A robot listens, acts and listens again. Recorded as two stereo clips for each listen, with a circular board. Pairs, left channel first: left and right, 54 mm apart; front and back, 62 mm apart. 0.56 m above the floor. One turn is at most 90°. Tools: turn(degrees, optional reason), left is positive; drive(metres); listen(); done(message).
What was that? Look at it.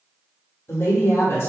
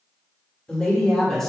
turn(degrees=85, reason="The woman speaking: 85° left.")
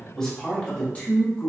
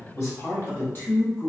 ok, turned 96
turn(degrees=55, reason="The woman speaking is now 55° left.")
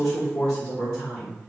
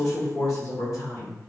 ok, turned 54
turn(degrees=25, reason="The woman speaking is now 25° left.")
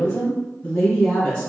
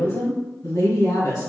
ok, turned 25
turn(degrees=15, reason="The woman speaking is now 15° left.")
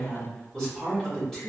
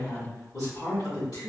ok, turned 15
done("Facing the woman speaking, 2 to 4 m away.")